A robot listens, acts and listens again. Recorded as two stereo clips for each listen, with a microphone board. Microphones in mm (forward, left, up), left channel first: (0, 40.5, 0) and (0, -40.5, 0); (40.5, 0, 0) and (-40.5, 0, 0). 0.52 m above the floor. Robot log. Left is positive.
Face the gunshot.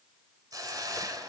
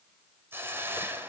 cmd idle
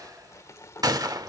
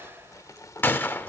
note: The gunshot: 60° right.
cmd yaw -60
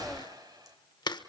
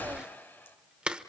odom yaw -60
end: Facing where the gunshot came from. I can't hear it now.